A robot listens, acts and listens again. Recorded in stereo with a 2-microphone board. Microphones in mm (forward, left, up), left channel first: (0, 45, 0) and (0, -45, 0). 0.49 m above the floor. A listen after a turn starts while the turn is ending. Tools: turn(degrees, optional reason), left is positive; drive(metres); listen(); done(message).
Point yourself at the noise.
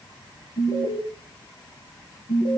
turn(degrees=55, reason="The alarm: about 55° left or 125° left.")
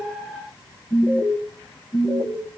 done("Facing the alarm.")